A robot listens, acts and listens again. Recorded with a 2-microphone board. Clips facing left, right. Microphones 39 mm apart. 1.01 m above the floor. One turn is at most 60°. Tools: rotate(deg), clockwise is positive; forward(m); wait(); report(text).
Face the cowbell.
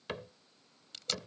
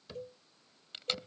rotate(60)
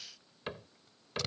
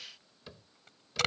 rotate(30)
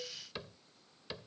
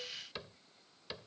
wait()
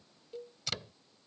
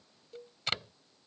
rotate(-10)
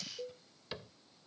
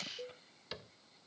report("Found it: a cowbell, straight ahead.")